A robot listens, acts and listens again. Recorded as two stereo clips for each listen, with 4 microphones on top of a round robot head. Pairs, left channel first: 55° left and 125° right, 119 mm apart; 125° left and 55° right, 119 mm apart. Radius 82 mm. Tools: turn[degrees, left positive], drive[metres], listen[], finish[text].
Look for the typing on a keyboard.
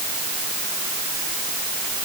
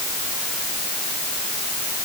Action: listen[]
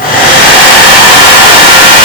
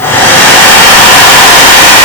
Action: listen[]
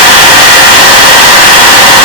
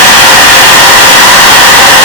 Action: finish[I can't make out typing on a keyboard to turn to.]